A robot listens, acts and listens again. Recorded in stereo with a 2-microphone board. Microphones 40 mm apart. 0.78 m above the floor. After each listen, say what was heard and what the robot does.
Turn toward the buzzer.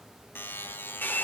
The buzzer: about 65° left or 115° left. Turn 65° left.
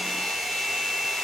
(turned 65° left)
Keep listening.
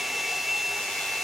Keep listening.
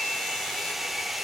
I heard a buzzer, but can't make it out now. It was about straight ahead or 50° left.